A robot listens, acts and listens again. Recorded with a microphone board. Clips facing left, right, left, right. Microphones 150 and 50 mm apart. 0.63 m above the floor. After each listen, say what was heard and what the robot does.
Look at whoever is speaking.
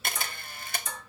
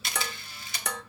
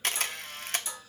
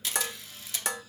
Keep listening.
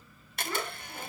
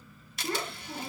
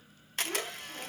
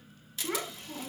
The child speaking: about 60° right or 120° right. Turn 60° right.
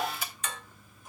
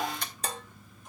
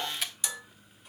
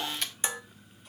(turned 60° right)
Found it: a child speaking, straight ahead.